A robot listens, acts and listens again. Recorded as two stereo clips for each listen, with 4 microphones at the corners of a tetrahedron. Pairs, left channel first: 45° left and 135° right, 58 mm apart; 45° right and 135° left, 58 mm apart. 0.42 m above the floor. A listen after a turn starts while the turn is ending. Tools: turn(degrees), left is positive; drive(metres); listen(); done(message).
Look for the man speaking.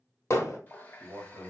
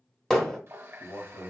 turn(degrees=-60)
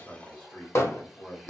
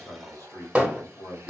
turn(degrees=-20)
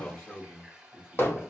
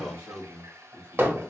done("Facing the man speaking.")